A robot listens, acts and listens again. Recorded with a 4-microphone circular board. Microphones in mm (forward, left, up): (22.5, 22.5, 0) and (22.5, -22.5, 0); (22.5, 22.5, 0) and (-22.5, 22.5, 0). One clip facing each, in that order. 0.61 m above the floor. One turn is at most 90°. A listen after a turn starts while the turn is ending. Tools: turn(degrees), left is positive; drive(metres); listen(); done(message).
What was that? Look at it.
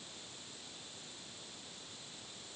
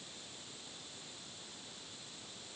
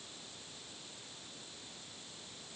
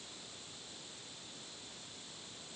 listen()
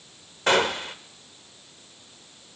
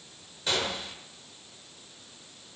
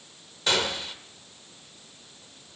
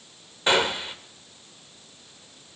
turn(degrees=90)
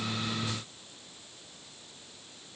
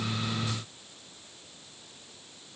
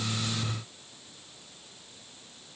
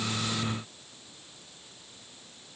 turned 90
turn(degrees=25)
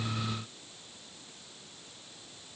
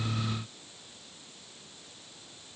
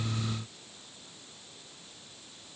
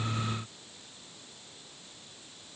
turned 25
done("I heard a gunshot from this way, but can't make it out now.")